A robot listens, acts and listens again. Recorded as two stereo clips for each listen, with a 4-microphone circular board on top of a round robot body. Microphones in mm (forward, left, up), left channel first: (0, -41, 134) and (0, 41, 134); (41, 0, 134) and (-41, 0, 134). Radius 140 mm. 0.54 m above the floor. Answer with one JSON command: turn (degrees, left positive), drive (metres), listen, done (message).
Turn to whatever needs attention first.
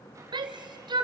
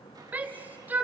{"turn": 110}
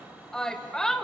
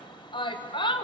{"turn": -10}
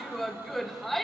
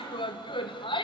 {"done": "Facing the shout, 2 to 4 m away."}